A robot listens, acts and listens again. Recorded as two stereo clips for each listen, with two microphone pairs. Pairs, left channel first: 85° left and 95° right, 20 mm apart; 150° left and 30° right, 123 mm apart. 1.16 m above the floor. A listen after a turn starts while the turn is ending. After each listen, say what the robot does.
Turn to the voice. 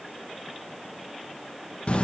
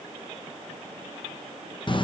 Keep listening.
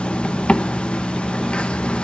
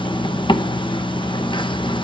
Keep listening.
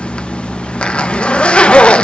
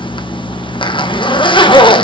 I can't make out anyone speaking, only a zipper.